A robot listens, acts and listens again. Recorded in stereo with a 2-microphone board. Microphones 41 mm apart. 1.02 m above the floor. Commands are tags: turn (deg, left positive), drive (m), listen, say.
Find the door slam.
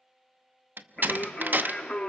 <turn deg="-45"/>
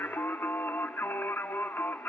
<listen/>
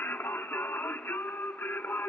<say>I heard a door slam, but can't make it out now. It was about straight ahead or 90° right.</say>